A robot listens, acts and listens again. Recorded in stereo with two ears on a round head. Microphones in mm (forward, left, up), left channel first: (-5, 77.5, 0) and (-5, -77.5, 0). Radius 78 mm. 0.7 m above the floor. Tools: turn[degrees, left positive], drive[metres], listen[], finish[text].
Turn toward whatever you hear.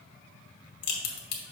Thought: The crack: about 60° left or 120° left.
Action: turn[60]
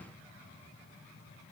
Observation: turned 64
Action: listen[]
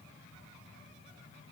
Action: finish[I heard a crack, but can't make it out now. It was about 5° right or 60° left.]